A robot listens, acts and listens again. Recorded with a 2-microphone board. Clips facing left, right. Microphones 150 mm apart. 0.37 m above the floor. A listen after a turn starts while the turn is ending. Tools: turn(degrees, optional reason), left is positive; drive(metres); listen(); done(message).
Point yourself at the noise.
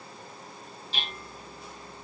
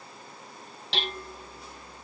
turn(degrees=-90)
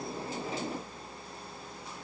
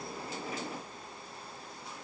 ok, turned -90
listen()
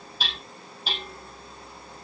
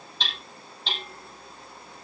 turn(degrees=10, reason="The hammering is now 10° left.")
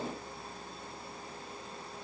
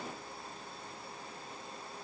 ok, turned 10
listen()
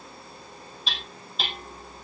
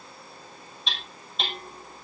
done("Found it: hammering, straight ahead, over 4 m away.")